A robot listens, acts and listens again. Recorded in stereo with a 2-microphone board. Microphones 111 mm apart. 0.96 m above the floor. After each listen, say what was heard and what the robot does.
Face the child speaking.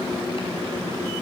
Keep listening.
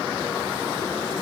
Keep listening.
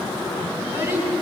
The child speaking: about 25° right or 155° right. Turn 25° right.
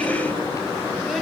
Keep listening.
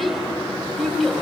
Found it: a child speaking, straight ahead.